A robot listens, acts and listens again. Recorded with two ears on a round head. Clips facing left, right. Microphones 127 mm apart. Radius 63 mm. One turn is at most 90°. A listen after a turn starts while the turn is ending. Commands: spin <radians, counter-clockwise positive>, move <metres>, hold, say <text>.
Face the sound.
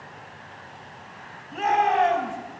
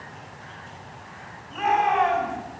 spin 0.79
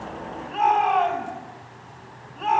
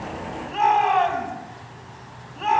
say Found it: a shout, straight ahead, over 4 m away.